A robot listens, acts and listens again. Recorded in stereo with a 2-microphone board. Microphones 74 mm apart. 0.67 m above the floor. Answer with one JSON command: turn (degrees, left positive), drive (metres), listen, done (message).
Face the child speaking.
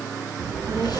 {"turn": -60}
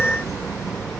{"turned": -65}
{"done": "Facing the child speaking."}